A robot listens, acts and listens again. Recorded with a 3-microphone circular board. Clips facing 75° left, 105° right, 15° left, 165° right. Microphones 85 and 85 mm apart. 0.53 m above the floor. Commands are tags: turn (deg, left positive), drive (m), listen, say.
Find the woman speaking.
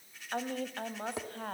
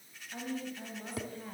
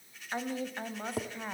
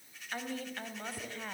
<turn deg="90"/>
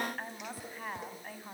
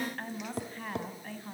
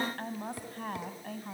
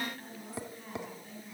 <say>Facing the woman speaking, 2 to 4 m away.</say>